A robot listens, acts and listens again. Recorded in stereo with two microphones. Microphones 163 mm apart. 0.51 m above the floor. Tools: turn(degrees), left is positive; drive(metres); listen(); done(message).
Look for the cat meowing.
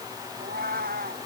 turn(degrees=-90)
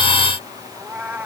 turn(degrees=-10)
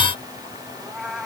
done("Found it: a cat meowing, straight ahead.")